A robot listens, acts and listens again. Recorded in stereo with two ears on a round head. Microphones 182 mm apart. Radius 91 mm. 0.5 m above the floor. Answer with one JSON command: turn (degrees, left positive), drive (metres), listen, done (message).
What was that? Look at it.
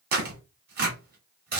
{"turn": -50}
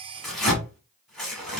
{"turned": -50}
{"done": "Facing the tearing paper."}